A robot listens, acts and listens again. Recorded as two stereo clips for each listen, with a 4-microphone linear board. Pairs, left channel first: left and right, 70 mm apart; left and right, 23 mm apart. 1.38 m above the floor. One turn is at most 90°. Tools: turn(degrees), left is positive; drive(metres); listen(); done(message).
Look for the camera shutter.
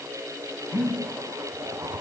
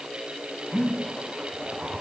listen()
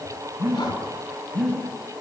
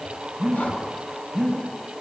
listen()
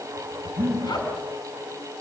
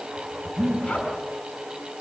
done("I can't make out a camera shutter to turn to.")